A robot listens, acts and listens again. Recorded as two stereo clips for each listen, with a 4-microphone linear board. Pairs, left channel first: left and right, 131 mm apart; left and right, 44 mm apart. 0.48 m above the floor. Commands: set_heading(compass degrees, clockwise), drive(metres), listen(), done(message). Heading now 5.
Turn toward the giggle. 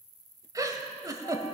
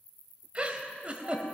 set_heading(30)
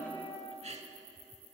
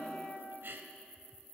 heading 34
set_heading(159)
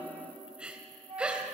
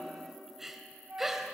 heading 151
set_heading(161)
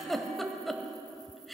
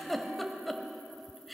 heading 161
done("Facing the giggle, under 1 m away.")